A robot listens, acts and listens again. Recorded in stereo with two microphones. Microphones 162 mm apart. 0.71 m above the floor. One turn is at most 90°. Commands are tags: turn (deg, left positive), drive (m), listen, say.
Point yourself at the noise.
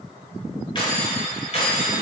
<turn deg="45"/>
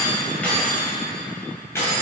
<turn deg="15"/>
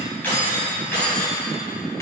<turn deg="15"/>
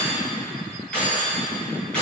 <say>Facing the keys jangling, over 4 m away.</say>